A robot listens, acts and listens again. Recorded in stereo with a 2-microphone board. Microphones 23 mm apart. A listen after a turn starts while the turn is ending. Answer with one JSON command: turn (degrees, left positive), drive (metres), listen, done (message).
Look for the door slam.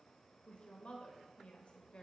{"listen": true}
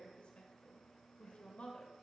{"listen": true}
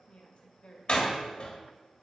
{"turn": 45}
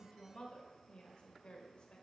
{"listen": true}
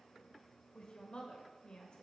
{"done": "I heard a door slam, but can't make it out now. It was about straight ahead or 90° left."}